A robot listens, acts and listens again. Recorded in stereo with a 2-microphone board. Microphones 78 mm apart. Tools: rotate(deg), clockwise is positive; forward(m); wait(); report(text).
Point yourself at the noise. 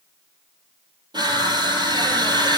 rotate(65)
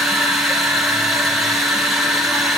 report("Found it: crushing, straight ahead, 2 to 4 m away.")